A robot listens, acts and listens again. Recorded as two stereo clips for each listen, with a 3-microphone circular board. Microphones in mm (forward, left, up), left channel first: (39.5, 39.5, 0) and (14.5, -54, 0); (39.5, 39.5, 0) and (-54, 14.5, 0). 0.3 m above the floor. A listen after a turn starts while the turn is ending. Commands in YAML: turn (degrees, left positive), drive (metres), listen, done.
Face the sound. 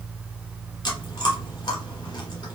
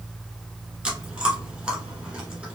turn: 115
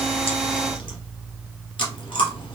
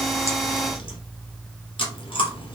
turn: 45
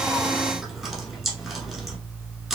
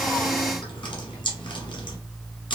turn: -15
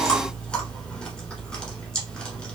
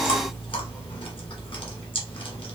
done: "Facing the chewing, 1 to 2 m away."